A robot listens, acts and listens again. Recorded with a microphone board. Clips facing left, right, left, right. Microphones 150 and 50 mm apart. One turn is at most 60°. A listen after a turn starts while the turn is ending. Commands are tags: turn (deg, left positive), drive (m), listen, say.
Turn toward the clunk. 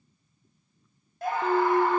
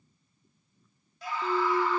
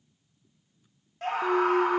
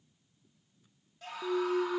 <turn deg="20"/>
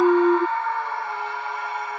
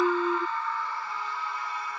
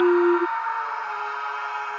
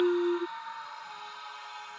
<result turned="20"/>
<turn deg="60"/>
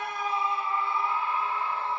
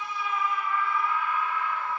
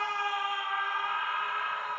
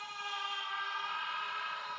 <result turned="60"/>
<turn deg="60"/>
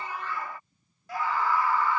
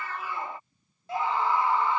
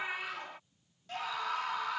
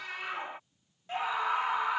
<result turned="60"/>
<turn deg="20"/>
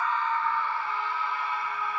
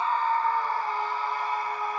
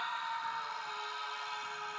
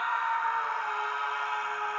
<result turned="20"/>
<say>I heard a clunk from this way, but can't make it out now.</say>